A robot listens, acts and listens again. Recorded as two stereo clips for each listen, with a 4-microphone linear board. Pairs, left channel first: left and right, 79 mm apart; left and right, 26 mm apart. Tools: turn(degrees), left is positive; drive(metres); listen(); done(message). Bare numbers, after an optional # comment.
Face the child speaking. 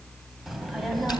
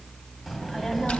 turn(30)
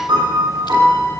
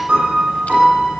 # So it is at 140° left.
turn(140)
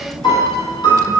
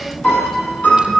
done("Found it: a child speaking, straight ahead.")